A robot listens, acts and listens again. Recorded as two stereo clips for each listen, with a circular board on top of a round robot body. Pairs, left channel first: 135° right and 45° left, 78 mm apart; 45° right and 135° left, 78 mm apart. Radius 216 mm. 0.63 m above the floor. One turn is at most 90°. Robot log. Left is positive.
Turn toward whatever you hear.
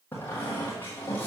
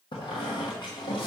note: The squeak: 65° right.
cmd yaw -65
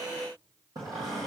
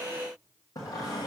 end: Facing the squeak.